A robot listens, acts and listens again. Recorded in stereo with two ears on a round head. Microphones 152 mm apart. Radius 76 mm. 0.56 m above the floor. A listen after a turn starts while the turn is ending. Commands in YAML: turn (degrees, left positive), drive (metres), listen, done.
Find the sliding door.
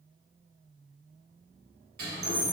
turn: -60
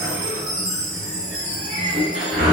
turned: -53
turn: -40
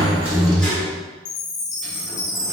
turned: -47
done: "Facing the sliding door."